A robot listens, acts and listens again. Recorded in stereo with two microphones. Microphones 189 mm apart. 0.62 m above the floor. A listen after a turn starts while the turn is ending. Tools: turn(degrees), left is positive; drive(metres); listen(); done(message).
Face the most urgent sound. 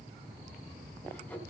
listen()
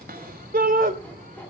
turn(degrees=-50)
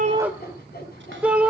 done("Facing the shout, 2 to 4 m away.")